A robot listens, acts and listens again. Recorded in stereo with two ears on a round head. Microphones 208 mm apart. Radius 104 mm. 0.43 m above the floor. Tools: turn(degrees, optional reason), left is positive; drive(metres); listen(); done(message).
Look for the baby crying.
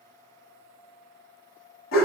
listen()
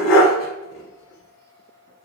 listen()
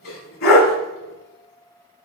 done("I can't make out a baby crying, only a dog barking.")